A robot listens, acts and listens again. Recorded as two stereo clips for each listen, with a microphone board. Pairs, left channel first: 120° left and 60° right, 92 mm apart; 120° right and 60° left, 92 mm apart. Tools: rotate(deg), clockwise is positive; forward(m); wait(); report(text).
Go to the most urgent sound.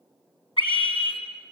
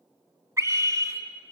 rotate(-115)
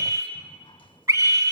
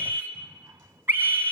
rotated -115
forward(1.0)
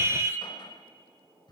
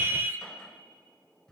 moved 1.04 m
forward(1.0)
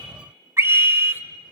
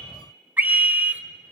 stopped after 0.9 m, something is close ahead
report("I am next to the scream.")